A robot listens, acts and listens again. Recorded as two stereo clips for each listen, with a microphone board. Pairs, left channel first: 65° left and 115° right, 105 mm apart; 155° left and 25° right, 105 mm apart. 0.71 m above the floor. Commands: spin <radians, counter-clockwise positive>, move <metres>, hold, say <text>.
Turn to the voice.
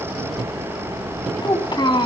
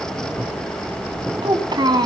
spin 0.44
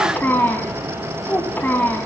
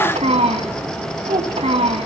say Facing the child speaking.